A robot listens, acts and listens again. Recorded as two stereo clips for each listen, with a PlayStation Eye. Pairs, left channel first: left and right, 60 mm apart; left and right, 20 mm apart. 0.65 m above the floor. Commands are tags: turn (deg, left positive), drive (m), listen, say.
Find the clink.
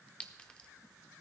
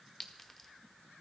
<turn deg="20"/>
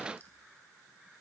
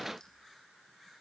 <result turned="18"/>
<listen/>
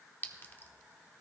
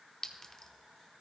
<turn deg="145"/>
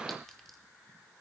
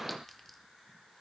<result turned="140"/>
<listen/>
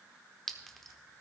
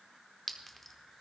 <say>Found it: a clink, straight ahead.</say>